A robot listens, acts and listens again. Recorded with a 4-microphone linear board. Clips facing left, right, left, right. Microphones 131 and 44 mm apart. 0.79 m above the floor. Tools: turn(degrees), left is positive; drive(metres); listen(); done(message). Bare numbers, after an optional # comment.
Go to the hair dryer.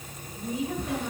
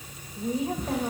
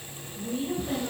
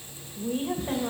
listen()
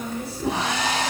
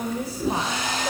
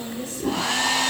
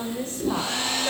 turn(90)
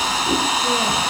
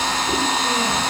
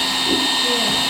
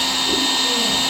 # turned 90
# So it is at 10° left.
turn(10)
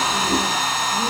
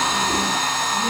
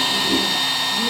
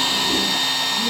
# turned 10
drive(1.0)
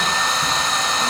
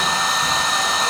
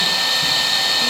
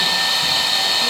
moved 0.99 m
drive(1.0)
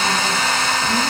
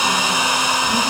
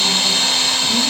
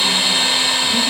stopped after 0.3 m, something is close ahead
# The hair dryer is now 15° right.
turn(-15)
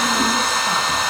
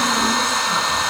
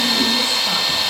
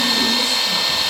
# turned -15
done("I am next to the hair dryer.")